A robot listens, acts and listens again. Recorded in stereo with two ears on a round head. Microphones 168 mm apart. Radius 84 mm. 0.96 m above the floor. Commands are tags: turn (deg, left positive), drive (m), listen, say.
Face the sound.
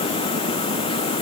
<listen/>
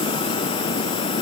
<listen/>
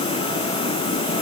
<say>I can't make out anything.</say>